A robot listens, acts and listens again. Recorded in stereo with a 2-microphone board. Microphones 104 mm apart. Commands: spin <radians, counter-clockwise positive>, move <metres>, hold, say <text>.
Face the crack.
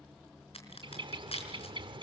spin 1.22
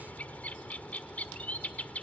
hold
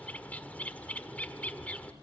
say I heard a crack, but can't make it out now. It was about straight ahead or 40° left.